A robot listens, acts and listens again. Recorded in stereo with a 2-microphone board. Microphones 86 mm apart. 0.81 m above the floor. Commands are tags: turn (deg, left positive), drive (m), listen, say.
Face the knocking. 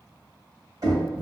<turn deg="-50"/>
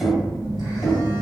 <say>Facing the knocking.</say>